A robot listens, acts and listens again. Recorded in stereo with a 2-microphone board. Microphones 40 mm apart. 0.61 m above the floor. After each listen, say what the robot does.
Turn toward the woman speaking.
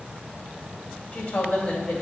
Turn 65° left.
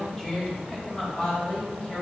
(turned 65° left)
Turn 30° left.
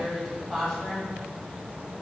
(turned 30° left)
Turn 10° left.
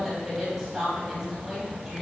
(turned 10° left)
Facing the woman speaking, 2 to 4 m away.